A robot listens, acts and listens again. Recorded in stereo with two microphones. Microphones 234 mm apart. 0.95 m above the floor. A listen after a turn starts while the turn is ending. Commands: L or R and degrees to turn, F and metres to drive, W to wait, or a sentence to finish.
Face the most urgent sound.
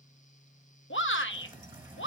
L60
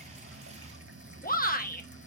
L45
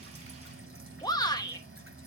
L20
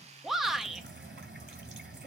Facing the shout.